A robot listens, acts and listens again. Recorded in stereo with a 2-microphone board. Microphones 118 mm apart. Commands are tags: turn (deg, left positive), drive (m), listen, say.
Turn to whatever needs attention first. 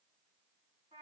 <listen/>
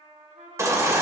<turn deg="-25"/>
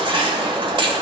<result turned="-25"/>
<turn deg="-125"/>
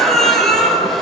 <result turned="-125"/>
<say>Facing the baby crying, 1 to 2 m away.</say>